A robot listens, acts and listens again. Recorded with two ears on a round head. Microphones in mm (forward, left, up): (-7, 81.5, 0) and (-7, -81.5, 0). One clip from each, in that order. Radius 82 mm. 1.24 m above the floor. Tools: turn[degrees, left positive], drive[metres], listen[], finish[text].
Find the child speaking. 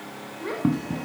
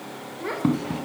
Action: turn[-30]
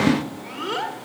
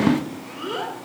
Thought: So it is at 30° left.
Action: turn[30]
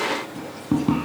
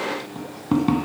Action: listen[]
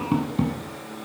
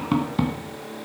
Action: listen[]
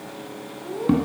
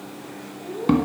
Thought: The child speaking is now 45° left.
Action: turn[45]
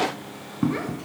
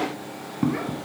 Action: listen[]
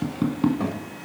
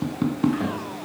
Thought: The child speaking is now 15° left.
Action: turn[15]
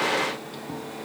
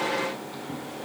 Action: listen[]
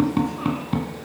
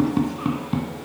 Action: listen[]
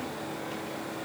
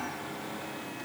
Action: finish[Facing where the child speaking came from. I can't hear it now.]